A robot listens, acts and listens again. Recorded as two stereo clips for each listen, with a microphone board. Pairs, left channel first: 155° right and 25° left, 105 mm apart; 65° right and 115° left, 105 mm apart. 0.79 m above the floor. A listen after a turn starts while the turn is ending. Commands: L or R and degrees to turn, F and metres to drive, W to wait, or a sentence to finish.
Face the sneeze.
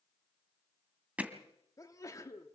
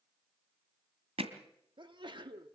L145
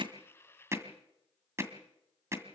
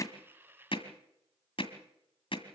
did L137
L10
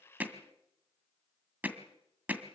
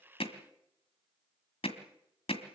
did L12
I heard a sneeze from this way, but can't make it out now.